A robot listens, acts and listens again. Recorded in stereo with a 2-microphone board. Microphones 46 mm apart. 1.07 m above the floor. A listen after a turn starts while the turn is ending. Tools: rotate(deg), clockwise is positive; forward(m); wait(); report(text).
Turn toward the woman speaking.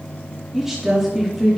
rotate(-30)
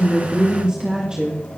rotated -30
rotate(15)
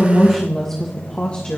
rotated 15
rotate(-25)
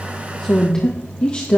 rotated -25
rotate(-30)
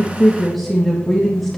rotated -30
report("Found it: a woman speaking, straight ahead, 1 to 2 m away.")